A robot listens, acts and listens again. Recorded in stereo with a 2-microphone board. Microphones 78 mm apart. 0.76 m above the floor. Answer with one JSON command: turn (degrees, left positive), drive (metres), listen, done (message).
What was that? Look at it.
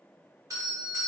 {"turn": -45}
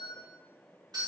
{"turn": -85}
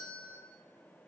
{"turn": 20}
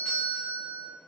{"done": "Found it: a doorbell, straight ahead, 1 to 2 m away."}